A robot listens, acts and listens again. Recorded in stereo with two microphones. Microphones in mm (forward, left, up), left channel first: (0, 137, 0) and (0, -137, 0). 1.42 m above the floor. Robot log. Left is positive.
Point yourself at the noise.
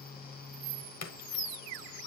note: The splash: about 70° left or 110° left.
cmd yaw +70
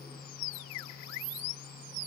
cmd idle
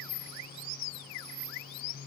end: I heard a splash, but can't make it out now. It was about straight ahead or 40° left.